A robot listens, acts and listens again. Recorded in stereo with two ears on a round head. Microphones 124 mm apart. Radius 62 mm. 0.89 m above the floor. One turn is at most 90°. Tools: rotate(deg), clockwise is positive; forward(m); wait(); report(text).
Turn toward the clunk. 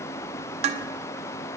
wait()
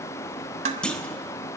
rotate(-30)
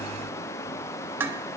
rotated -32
wait()
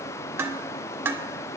report("I heard a clunk, but can't make it out now. It was about 25° right or 140° left.")